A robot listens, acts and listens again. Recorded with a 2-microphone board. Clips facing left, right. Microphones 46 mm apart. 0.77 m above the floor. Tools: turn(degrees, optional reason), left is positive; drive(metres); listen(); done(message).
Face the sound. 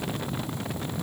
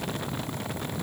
listen()
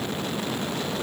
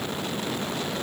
listen()
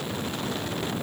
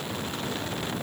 done("I can't make out anything to turn to.")